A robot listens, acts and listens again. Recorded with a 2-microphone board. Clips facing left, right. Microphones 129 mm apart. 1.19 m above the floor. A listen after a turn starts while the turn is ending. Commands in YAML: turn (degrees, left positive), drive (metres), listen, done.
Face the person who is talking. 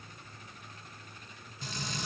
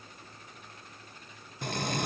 listen: true
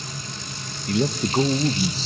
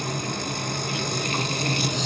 turn: 40
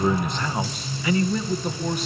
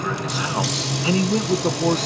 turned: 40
turn: -45
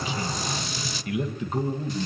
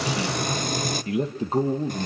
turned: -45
turn: -35
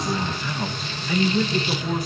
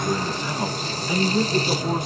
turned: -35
turn: -20
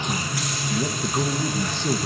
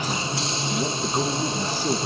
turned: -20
turn: -10
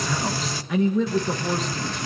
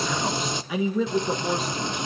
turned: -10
done: "Facing the man speaking, 1 to 2 m away."